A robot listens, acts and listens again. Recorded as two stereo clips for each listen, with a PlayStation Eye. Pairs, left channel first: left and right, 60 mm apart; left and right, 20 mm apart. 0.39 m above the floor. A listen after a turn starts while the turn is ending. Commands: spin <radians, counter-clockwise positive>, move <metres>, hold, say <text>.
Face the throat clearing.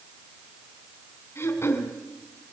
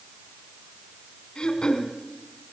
spin 0.79
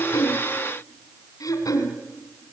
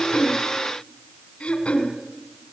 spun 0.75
spin 1.57
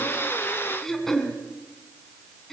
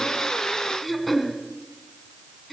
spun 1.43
say Found it: throat clearing, straight ahead.